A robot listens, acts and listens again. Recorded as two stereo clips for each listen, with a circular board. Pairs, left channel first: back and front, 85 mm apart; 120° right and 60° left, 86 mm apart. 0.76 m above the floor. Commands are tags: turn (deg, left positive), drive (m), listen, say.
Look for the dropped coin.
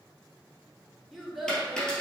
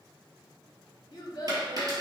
<turn deg="100"/>
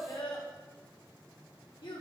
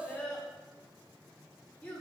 <say>Facing where the dropped coin came from. I can't hear it now.</say>